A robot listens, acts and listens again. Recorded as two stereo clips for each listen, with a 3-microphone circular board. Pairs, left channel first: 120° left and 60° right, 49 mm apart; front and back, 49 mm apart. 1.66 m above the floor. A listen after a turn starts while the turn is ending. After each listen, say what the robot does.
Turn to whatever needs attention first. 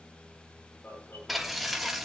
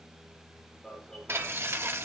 Turn 80° left.
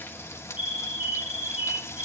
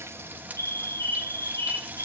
Found it: an alarm, straight ahead, over 4 m away.